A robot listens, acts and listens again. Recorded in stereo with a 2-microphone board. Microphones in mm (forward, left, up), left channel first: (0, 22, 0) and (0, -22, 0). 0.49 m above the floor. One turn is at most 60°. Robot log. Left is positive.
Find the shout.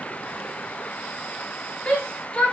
note: The shout: about 30° left or 150° left.
cmd yaw +30
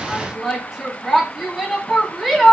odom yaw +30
end: Facing the shout, 1 to 2 m away.